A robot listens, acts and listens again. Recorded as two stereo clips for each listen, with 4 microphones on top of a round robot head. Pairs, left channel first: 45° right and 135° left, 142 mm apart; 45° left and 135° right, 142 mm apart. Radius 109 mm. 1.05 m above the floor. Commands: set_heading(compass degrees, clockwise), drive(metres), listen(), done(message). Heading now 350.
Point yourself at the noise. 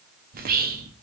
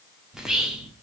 set_heading(210)
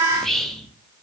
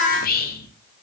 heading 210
set_heading(170)
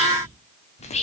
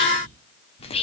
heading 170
done("Facing the whispering, under 1 m away.")